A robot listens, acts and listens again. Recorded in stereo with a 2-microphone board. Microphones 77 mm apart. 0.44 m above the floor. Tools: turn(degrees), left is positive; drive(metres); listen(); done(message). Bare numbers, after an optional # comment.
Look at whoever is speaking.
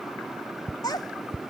# The child speaking: about 60° left or 120° left.
turn(60)
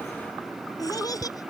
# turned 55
# So it is at 55° left.
turn(55)
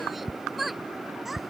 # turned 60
done("Found it: a child speaking, straight ahead.")